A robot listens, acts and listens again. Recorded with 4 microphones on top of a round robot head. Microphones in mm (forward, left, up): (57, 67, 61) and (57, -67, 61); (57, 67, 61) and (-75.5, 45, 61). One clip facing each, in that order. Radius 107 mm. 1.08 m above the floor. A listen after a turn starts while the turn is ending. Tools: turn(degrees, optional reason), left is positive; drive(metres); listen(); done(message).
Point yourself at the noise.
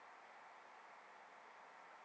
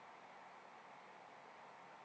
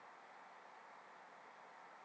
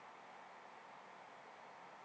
listen()
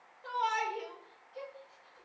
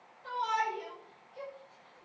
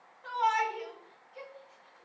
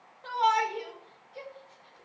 turn(degrees=130, reason="The shout: 130° left.")
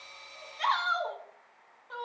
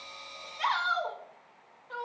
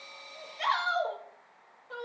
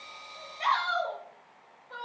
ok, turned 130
done("Facing the shout, over 4 m away.")